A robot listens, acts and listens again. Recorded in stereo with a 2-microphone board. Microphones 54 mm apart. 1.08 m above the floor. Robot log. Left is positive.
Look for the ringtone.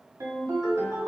cmd yaw -90
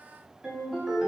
end: Facing the ringtone.